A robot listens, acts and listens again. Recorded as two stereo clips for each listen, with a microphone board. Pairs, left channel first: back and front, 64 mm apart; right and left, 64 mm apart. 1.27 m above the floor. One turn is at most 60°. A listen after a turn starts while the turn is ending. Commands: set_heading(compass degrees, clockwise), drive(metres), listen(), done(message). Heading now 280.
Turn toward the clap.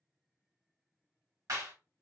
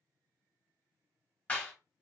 set_heading(300)
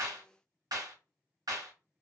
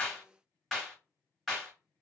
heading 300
done("Facing the clap, 1 to 2 m away.")